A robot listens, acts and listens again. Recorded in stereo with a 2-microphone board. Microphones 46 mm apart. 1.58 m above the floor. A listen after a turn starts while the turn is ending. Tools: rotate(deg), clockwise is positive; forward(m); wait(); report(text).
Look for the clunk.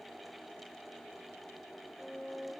wait()
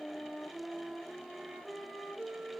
wait()
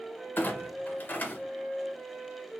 rotate(-40)
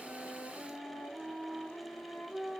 wait()
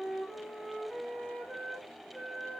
report("I heard a clunk, but can't make it out now. It was about straight ahead or 100° left.")